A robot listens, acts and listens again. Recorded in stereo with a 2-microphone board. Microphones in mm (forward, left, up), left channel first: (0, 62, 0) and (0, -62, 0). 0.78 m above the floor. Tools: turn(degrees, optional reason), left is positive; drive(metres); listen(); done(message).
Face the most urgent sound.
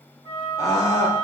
turn(degrees=25, reason="The scream: about 25° left or 155° left.")
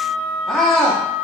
done("Facing the scream.")